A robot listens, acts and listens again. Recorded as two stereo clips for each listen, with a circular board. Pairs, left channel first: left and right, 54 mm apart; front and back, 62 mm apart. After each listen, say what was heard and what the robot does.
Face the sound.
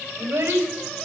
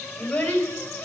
The child speaking: 75° right. Turn 75° right.
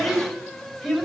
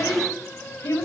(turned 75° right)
Facing the child speaking, over 4 m away.